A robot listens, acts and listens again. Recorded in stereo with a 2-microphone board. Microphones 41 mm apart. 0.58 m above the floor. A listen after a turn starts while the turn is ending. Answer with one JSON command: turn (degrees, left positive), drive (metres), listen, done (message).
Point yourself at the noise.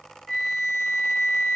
{"turn": 30}
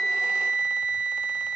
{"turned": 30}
{"turn": -30}
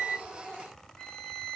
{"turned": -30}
{"turn": 15}
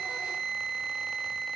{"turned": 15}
{"done": "Facing the flute."}